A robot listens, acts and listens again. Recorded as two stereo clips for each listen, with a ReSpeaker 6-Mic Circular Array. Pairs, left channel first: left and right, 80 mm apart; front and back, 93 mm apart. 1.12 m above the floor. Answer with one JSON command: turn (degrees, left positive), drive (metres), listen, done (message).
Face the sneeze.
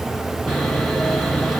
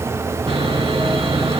{"listen": true}
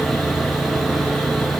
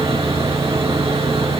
{"listen": true}
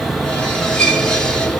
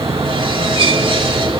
{"done": "I can't make out a sneeze, only sawing."}